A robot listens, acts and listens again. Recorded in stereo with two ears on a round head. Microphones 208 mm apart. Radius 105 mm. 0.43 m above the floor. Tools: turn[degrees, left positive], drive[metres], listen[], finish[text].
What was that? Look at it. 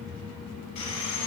Action: turn[90]
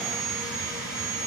Action: finish[Found it: sawing, straight ahead, 1 to 2 m away.]